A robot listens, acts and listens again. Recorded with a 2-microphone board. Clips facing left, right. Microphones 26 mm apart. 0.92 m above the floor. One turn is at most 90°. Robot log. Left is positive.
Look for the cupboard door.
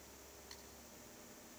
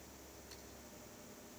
cmd idle
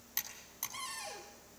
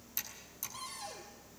cmd yaw +90
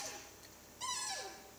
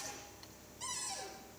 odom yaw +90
note: So it is at 10° left.
cmd yaw +10
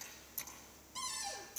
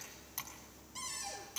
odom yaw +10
end: Found it: a cupboard door, straight ahead, over 4 m away.